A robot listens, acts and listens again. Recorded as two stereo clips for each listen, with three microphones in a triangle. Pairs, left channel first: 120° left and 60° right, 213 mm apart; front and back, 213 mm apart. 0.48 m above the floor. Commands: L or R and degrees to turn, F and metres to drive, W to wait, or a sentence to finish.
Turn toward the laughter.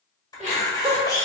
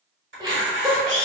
R115
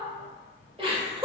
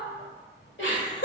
Facing the laughter.